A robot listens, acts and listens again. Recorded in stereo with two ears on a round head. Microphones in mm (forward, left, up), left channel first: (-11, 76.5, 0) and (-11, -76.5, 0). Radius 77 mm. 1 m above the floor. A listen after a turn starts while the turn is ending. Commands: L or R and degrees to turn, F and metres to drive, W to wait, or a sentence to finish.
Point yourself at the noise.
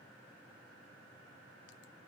W
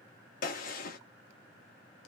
L55
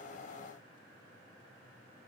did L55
W
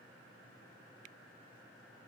I heard a gunshot, but can't make it out now. It was about straight ahead or 70° left.